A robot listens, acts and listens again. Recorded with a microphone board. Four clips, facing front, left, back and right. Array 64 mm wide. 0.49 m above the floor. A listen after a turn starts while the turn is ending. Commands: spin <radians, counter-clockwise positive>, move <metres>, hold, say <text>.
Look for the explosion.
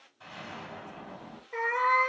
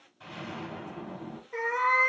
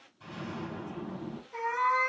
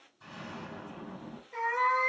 spin 0.87
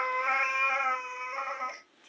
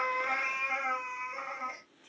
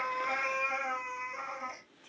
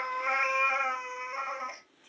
say I heard an explosion from this way, but can't make it out now.